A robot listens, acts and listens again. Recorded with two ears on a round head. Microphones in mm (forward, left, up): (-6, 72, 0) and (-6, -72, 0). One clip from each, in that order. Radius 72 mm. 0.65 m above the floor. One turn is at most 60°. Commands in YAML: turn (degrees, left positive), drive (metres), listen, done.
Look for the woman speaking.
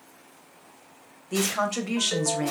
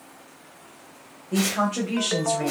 turn: 60
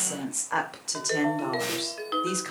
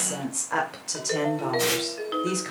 turn: 20
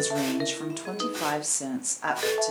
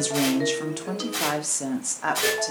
done: "Found it: a woman speaking, straight ahead."